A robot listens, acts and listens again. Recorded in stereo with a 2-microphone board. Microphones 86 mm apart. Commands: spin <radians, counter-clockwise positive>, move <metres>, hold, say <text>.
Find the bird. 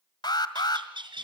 spin -1.13
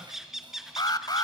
say Found it: a bird, straight ahead.